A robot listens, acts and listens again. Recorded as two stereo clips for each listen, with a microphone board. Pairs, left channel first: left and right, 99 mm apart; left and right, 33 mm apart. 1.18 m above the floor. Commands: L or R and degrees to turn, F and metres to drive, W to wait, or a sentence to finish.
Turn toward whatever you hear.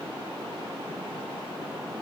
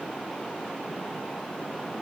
W
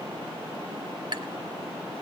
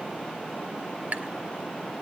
R50
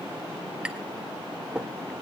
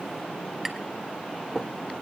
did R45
R10
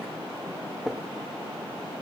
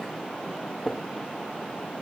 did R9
Found it: tapping, straight ahead, 1 to 2 m away.